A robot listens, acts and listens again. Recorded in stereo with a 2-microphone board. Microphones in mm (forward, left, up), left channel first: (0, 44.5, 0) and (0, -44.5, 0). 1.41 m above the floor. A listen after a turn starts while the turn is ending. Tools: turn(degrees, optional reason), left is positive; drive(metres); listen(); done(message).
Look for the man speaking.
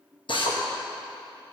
listen()
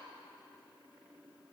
listen()
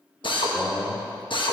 turn(degrees=25, reason="The man speaking: about 25° left or 155° left.")
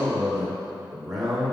done("Facing the man speaking, over 4 m away.")